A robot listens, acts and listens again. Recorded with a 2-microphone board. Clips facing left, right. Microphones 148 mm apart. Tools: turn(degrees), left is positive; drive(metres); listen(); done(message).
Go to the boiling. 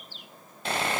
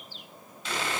listen()
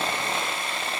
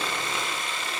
listen()
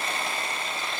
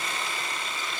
done("I can't make out boiling, only sawing.")